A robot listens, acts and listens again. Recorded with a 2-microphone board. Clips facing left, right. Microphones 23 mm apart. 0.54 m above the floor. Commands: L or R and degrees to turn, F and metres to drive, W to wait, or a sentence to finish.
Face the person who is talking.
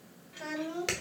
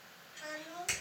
L55
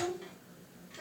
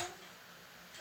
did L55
L45
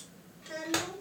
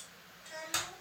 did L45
L40
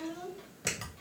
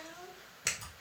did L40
L15
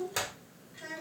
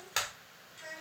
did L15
L10
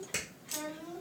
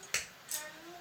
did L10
Found it: a child speaking, straight ahead, 2 to 4 m away.